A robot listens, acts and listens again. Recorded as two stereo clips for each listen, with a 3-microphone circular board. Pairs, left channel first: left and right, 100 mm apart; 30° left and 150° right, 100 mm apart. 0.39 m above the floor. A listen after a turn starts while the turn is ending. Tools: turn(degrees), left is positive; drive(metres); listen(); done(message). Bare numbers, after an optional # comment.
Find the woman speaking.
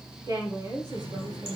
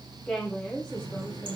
# The woman speaking: 50° right.
turn(-50)
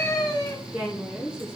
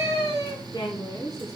# The woman speaking is now 15° right.
turn(-15)
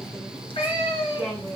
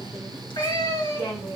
done("Facing the woman speaking, 2 to 4 m away.")